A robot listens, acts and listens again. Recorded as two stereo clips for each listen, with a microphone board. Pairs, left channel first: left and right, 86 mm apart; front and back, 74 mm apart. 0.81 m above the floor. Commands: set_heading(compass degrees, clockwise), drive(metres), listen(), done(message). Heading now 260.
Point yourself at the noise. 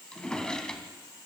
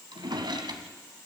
set_heading(90)
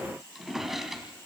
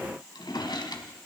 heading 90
done("Found it: a drawer, straight ahead, 2 to 4 m away.")